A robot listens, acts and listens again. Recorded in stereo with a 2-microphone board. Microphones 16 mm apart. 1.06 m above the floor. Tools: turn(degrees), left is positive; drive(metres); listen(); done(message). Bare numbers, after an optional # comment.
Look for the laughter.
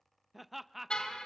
turn(-30)
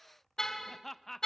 # So it is at 30° left.
turn(30)
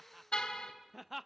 done("Found it: laughter, straight ahead.")